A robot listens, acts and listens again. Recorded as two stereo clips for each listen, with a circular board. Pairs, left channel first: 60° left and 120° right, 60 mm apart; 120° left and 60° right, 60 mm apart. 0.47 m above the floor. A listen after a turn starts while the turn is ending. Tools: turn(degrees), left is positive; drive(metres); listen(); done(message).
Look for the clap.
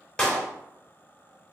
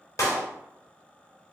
turn(degrees=135)
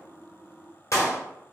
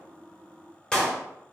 turn(degrees=40)
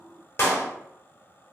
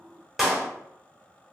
turn(degrees=20)
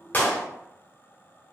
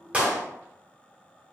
done("Facing the clap, 1 to 2 m away.")